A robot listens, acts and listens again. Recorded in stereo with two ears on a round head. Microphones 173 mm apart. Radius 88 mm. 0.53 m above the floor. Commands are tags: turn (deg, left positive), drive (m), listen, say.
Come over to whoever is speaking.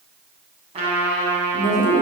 <turn deg="40"/>
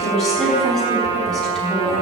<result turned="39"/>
<drive m="1.0"/>
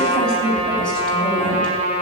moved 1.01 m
<drive m="1.0"/>
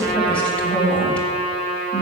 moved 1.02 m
<drive m="1.0"/>
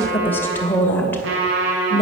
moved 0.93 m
<turn deg="10"/>
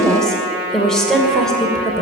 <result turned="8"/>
<drive m="1.0"/>
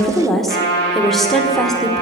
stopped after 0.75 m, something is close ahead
<say>Arrived at the woman speaking, straight ahead.</say>